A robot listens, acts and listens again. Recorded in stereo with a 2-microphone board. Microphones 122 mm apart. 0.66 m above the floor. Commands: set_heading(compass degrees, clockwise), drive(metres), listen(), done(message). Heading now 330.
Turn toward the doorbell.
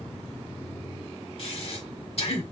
listen()
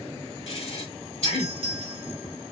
set_heading(25)
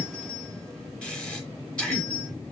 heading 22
set_heading(52)
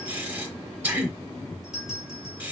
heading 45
done("Facing the doorbell.")